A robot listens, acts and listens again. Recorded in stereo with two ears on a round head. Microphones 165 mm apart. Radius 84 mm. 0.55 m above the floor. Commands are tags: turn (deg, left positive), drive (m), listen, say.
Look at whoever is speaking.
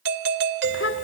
<turn deg="70"/>
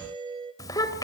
<turn deg="20"/>
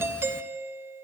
<listen/>
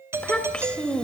<say>Found it: a child speaking, straight ahead.</say>